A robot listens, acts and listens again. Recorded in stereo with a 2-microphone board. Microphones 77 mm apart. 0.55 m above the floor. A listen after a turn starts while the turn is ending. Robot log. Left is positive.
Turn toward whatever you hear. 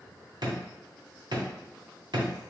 note: The drawer: about 75° right or 105° right.
cmd yaw -75
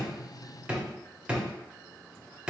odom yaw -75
note: So it is at 15° right.
cmd yaw -15
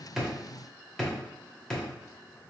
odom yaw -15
end: Facing the drawer, 1 to 2 m away.